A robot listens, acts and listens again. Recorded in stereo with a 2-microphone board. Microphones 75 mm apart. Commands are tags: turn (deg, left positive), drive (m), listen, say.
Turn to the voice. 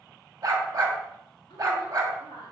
<turn deg="90"/>
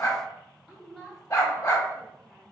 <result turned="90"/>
<say>Facing the woman speaking.</say>